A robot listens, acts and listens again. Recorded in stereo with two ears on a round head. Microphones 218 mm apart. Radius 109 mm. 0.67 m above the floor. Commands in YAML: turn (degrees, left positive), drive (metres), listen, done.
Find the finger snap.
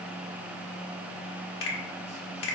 turn: 60
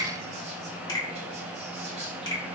turn: 20
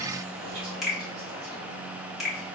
done: "Found it: a finger snap, straight ahead."